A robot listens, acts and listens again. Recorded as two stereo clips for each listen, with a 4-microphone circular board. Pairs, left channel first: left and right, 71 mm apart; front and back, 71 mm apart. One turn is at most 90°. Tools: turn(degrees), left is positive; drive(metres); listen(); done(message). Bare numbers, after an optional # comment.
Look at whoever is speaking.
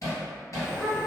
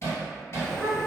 # The child speaking: 150° right.
turn(-90)
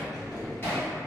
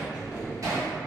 # Nothing new. It was at 60° right.
turn(-60)
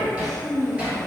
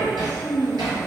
done("Facing the child speaking, 1 to 2 m away.")